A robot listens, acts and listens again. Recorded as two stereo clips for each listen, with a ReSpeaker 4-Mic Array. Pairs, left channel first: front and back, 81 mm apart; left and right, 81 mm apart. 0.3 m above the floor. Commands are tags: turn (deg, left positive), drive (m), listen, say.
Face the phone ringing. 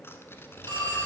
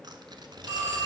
<turn deg="-140"/>
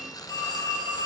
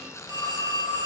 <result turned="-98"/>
<turn deg="-45"/>
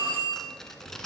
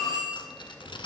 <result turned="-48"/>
<say>Found it: a phone ringing, straight ahead, over 4 m away.</say>